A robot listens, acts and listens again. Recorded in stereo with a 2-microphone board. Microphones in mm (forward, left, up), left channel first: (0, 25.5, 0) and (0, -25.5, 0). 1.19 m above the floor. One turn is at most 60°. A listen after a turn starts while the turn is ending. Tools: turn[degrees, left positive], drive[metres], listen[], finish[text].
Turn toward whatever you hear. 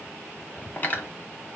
Thought: The cutlery clinking: about 35° left or 145° left.
Action: turn[35]
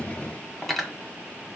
Action: finish[Facing the cutlery clinking.]